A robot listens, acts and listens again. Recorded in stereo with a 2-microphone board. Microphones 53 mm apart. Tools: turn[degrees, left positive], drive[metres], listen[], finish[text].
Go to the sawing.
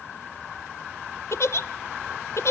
Action: listen[]
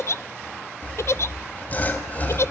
Thought: The sawing: about 30° left or 150° left.
Action: turn[30]
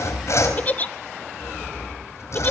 Thought: So it is at 115° left.
Action: turn[115]
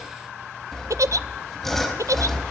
Action: drive[1.0]
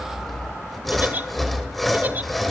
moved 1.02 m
Action: drive[1.0]
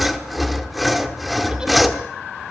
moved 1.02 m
Action: drive[1.0]
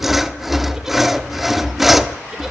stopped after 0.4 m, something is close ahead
Action: finish[I am next to the sawing.]